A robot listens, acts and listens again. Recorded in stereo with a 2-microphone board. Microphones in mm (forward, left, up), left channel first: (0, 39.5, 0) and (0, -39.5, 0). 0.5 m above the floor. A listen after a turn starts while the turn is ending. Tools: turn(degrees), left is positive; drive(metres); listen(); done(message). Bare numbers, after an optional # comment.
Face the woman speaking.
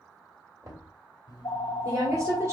# The woman speaking: about 40° right or 140° right.
turn(-40)
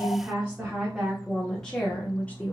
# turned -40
# So it is at 20° left.
turn(20)
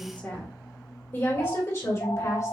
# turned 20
# The woman speaking is now 45° left.
turn(45)
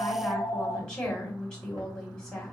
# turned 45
# The woman speaking is now 15° left.
turn(15)
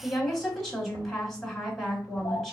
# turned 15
# The woman speaking is now 10° left.
turn(10)
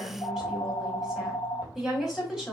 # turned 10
done("Facing the woman speaking.")